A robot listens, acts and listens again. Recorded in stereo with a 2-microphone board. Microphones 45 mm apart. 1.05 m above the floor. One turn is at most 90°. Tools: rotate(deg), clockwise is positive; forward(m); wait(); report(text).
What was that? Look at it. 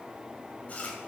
rotate(-35)
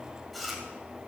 report("Found it: chewing, straight ahead, 2 to 4 m away.")